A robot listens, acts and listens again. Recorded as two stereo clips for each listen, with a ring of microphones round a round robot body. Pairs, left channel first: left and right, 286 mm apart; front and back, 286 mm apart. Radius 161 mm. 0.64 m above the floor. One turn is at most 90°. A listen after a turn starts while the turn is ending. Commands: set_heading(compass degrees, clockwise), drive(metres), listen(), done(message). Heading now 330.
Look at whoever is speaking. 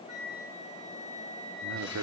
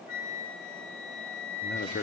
set_heading(20)
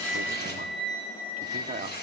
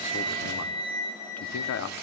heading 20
set_heading(45)
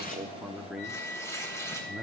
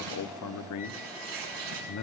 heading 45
done("Facing the man speaking.")